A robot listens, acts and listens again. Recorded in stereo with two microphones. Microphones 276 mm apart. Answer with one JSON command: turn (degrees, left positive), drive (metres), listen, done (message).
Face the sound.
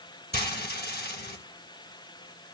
{"turn": 35}
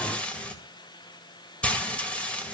{"done": "Found it: frying, straight ahead, 2 to 4 m away."}